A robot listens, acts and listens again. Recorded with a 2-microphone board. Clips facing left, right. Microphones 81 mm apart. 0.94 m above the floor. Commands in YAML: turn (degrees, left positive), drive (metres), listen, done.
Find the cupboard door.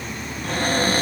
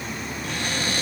turn: 50
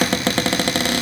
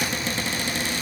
turn: 80
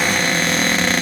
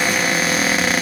done: "Facing the cupboard door."